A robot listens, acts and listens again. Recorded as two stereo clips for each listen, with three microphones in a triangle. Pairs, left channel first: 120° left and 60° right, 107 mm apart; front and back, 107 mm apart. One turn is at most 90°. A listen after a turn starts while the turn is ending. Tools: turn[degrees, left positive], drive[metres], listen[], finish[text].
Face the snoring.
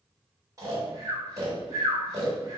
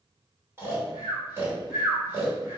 Thought: The snoring: 115° right.
Action: turn[-90]
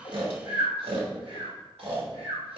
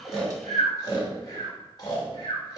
Thought: The snoring is now 50° right.
Action: turn[-50]
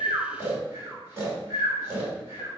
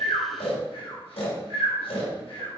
Action: finish[Facing the snoring, 2 to 4 m away.]